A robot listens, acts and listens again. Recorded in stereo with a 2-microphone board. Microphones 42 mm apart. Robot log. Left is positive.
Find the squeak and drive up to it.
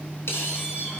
cmd yaw +90
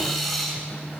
cmd fwd 1.0
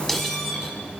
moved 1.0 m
cmd fwd 1.0
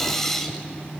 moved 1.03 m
note: The squeak is now 10° left.
cmd yaw +10
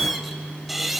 cmd fwd 1.0
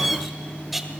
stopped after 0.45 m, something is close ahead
end: I am next to the squeak.